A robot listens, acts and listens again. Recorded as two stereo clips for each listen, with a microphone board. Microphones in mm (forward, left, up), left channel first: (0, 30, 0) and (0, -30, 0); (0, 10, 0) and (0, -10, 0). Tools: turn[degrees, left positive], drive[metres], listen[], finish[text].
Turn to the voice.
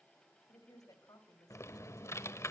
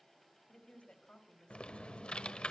Action: turn[90]
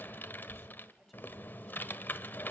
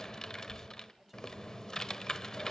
Action: listen[]
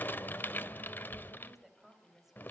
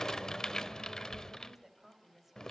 Action: finish[Found it: a woman speaking, straight ahead.]